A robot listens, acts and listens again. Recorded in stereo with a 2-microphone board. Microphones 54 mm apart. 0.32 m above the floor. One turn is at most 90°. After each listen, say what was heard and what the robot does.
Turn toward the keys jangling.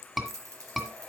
Turn 90° right.
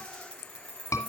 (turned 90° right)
So it is at 20° left. Turn 20° left.
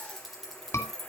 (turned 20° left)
Facing the keys jangling.